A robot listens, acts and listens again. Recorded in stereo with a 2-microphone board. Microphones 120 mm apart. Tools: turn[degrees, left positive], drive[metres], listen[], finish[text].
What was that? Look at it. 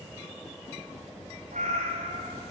Action: turn[-90]
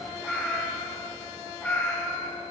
Thought: So it is at 10° left.
Action: turn[10]
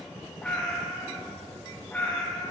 Thought: The cat meowing is now 10° left.
Action: turn[10]
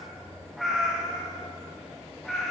Action: finish[Found it: a cat meowing, straight ahead, over 4 m away.]